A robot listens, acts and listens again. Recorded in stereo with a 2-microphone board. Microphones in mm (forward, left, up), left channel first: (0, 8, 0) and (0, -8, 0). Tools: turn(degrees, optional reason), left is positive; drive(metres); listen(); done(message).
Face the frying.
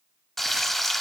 turn(degrees=30)
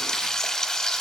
turn(degrees=145, reason="So it is at 145° left.")
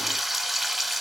done("Facing the frying.")